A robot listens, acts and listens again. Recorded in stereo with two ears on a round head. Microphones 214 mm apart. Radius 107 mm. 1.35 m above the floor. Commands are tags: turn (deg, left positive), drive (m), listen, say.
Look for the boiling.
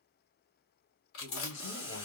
<turn deg="25"/>
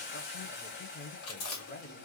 <turn deg="130"/>
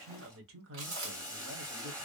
<turn deg="-15"/>
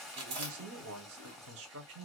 <say>Found it: boiling, straight ahead, 1 to 2 m away.</say>